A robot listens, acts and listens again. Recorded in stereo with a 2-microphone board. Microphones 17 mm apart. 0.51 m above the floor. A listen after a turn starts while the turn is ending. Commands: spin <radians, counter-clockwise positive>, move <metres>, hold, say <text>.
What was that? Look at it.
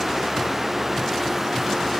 hold
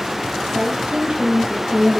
spin -1.05
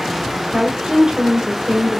spin -0.87
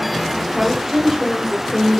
spin -0.17
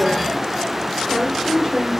say Facing the woman speaking.